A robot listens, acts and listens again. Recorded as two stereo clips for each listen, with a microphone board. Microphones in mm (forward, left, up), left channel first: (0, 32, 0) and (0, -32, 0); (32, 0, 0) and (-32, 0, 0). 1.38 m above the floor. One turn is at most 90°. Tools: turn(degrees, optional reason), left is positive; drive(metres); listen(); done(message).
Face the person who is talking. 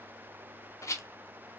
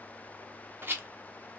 listen()
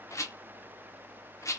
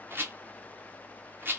listen()
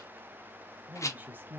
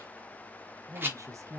turn(degrees=-90, reason="The woman speaking: 140° right.")
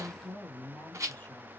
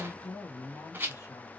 turn(degrees=20, reason="The woman speaking is now 20° left.")
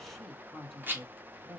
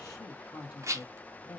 done("Facing the woman speaking, 1 to 2 m away.")